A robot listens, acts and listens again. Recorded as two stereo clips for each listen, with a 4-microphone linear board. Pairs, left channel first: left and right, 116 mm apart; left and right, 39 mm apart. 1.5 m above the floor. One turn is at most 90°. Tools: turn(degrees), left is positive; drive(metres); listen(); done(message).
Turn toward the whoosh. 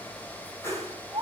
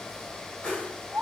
turn(degrees=25)
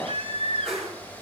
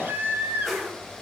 done("Facing the whoosh, over 4 m away.")